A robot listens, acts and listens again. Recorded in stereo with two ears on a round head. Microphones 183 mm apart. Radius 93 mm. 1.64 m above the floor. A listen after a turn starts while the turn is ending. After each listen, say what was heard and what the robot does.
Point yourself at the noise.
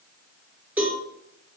Turn 30° right.
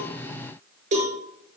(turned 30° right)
So it is at 140° right. Turn 140° right.
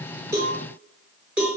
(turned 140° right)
Found it: a cowbell, straight ahead, over 4 m away.